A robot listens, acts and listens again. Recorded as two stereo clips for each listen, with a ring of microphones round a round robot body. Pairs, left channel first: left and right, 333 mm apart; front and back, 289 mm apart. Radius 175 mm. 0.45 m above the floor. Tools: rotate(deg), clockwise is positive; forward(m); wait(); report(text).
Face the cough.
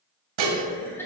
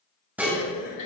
report("Found it: a cough, straight ahead, over 4 m away.")